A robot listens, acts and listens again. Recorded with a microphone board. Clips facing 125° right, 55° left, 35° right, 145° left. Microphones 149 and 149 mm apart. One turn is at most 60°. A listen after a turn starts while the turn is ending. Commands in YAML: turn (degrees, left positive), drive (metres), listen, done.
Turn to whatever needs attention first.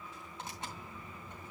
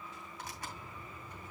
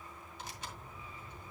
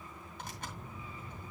listen: true
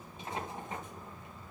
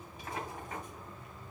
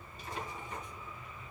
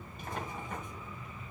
listen: true
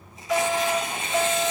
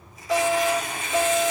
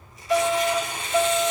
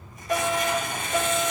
turn: 60
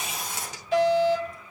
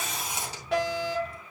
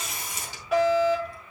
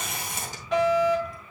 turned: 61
turn: 45
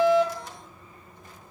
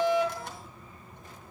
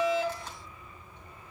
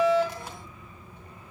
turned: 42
listen: true
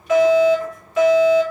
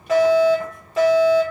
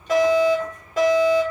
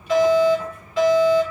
done: "Found it: a fire alarm, straight ahead."